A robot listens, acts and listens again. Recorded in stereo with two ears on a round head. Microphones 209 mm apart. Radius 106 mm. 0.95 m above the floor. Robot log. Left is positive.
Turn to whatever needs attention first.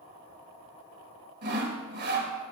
cmd idle
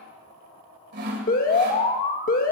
note: The alarm: about 40° left or 140° left.
cmd yaw +40
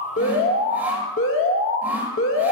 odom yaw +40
note: So it is at 90° left.
cmd yaw +90
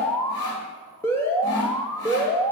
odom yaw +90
note: The alarm is now 15° left.
cmd yaw +15
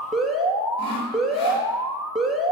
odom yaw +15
end: Facing the alarm.